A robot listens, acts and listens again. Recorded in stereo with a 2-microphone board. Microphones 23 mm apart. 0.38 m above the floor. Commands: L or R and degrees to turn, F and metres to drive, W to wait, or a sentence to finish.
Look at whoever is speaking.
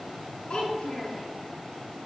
L65
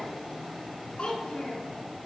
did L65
L50
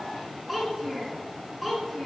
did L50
R10
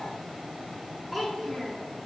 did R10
Facing the child speaking.